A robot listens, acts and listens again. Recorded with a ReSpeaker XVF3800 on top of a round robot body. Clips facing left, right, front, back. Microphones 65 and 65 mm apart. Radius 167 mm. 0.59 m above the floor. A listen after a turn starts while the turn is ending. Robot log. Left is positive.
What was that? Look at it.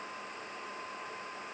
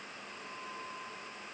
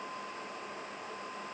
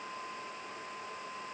cmd idle
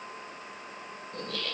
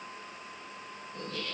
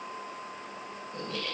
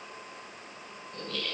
note: The laughter: 70° left.
cmd yaw +70
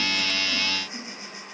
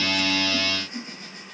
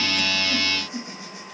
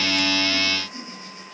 note: The laughter is now 10° left.
cmd yaw +10
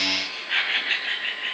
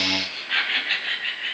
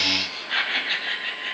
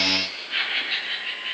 end: Facing the laughter.